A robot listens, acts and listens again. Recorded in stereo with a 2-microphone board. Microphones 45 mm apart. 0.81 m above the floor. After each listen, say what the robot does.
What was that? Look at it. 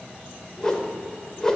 Turn 30° left.
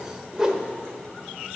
Turn 15° right.
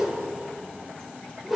Facing the whoosh, under 1 m away.